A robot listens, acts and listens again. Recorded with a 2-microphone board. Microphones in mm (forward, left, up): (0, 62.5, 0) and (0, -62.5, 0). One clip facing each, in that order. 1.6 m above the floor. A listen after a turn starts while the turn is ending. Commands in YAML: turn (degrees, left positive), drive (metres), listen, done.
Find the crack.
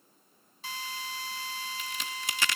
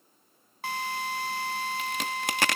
turn: -60
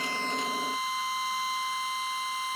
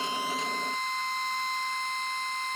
listen: true
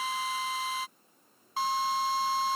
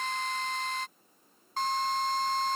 done: "I heard a crack, but can't make it out now. It was about straight ahead or 60° right."